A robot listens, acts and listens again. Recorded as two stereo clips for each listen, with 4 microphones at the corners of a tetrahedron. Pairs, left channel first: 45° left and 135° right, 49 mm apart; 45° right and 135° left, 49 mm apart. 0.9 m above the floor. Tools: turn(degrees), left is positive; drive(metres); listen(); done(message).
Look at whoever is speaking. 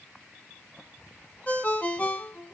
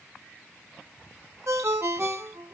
listen()
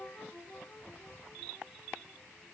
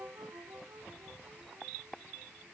listen()
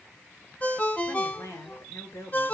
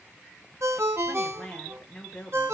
turn(degrees=35)
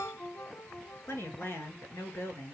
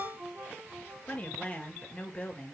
turn(degrees=15)
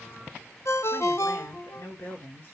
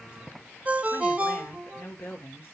done("Facing the woman speaking.")